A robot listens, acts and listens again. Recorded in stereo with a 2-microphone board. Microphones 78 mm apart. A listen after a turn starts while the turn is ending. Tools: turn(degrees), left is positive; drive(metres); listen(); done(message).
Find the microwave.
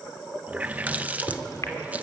turn(degrees=45)
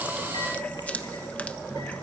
listen()
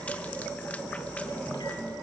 listen()
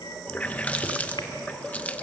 turn(degrees=90)
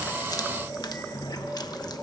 listen()
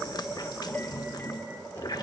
listen()
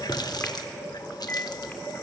turn(degrees=30)
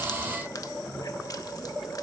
listen()
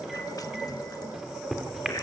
done("Facing the microwave, 2 to 4 m away.")